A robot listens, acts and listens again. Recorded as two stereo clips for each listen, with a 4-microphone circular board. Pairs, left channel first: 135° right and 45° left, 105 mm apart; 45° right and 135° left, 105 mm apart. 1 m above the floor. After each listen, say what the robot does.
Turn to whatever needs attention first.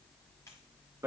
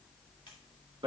Keep listening.
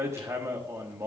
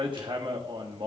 Keep listening.
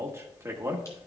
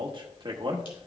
I can't make out anything urgent, only hammering.